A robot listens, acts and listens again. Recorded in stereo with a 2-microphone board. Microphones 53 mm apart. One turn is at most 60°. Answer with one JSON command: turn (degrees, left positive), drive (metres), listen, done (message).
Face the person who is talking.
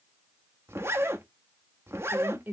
{"turn": -35}
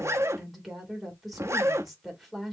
{"done": "Found it: a woman speaking, straight ahead, 2 to 4 m away."}